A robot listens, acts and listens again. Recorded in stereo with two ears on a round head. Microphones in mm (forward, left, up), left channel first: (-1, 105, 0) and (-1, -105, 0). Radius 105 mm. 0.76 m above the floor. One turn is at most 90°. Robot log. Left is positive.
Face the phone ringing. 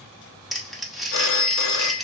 note: The phone ringing: about 55° left or 125° left.
cmd yaw +55
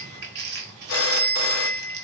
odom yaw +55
note: So it is at 65° left.
cmd yaw +65
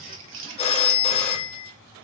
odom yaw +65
note: The phone ringing is now 25° left.
cmd yaw +25
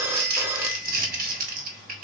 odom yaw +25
note: The phone ringing is now 10° right.
cmd yaw -10
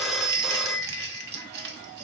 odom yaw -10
end: Found it: a phone ringing, straight ahead.